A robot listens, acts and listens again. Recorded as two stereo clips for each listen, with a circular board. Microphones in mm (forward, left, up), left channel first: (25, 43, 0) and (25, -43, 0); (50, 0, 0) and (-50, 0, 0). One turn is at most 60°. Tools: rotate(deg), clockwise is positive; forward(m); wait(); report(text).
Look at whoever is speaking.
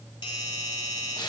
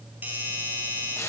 wait()
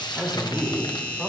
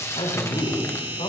report("Found it: a man speaking, straight ahead.")